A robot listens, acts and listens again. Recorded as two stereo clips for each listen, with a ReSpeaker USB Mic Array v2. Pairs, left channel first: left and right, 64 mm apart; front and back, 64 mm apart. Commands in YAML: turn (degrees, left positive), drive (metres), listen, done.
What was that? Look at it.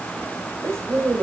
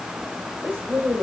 turn: -130
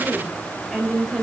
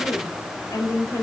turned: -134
done: "Found it: a woman speaking, straight ahead."